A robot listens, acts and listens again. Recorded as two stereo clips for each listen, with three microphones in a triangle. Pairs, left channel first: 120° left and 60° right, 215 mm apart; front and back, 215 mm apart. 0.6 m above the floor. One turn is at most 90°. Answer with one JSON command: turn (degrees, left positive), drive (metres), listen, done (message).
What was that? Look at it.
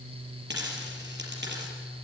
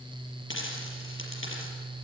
{"turn": -25}
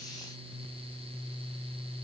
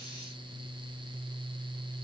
{"done": "I heard a dropped coin from this way, but can't make it out now."}